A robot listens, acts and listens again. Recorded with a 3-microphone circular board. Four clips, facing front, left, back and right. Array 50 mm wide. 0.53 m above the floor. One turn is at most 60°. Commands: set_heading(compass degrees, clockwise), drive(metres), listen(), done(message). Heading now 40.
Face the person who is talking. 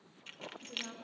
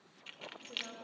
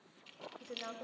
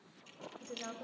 set_heading(100)
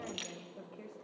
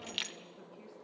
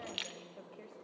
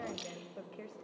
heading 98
set_heading(158)
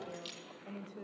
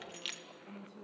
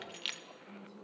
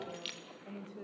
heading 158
set_heading(193)
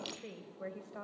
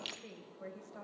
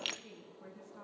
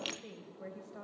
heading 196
done("Found it: a woman speaking, straight ahead.")